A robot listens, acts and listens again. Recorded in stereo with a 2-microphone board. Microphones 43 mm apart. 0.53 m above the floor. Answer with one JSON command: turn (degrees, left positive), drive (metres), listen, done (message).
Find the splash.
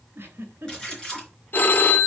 {"turn": 15}
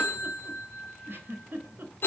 {"listen": true}
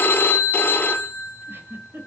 {"done": "I heard a splash, but can't make it out now. It was about straight ahead or 150° left."}